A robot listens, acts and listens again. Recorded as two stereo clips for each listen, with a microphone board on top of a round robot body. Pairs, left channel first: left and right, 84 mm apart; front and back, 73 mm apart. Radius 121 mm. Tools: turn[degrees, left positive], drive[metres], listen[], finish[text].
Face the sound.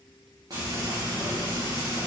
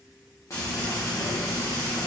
Thought: The frying: 45° right.
Action: turn[-45]
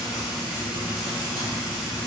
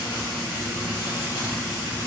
Action: finish[Found it: frying, straight ahead, 1 to 2 m away.]